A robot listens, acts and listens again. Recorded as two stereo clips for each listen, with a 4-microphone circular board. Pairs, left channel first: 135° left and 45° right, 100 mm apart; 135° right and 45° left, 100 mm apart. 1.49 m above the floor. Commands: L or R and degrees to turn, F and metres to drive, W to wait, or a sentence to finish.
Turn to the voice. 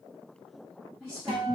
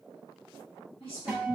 R110
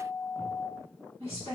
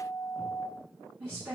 R25
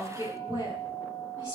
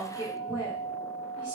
Found it: a woman speaking, straight ahead, 1 to 2 m away.